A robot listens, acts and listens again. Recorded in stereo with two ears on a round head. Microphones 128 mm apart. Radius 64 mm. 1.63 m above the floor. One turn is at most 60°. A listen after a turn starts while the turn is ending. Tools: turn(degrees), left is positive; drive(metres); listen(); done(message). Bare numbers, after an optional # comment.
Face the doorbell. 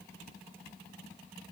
listen()
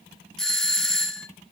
turn(30)
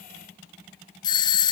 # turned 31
# So it is at 145° left.
turn(60)
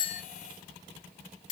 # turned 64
# The doorbell is now 80° left.
turn(60)
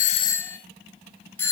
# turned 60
# The doorbell is now 20° left.
turn(20)
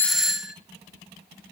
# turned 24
done("Facing the doorbell.")